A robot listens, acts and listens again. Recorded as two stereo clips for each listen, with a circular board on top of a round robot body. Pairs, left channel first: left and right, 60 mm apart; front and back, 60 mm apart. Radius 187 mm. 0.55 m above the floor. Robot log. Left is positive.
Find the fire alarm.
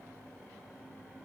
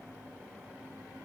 cmd idle
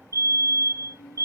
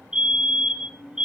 note: The fire alarm: 105° right.
cmd yaw -105
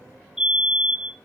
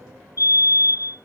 note: The fire alarm is now 10° right.
cmd yaw -10
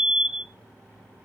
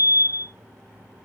end: Found it: a fire alarm, straight ahead.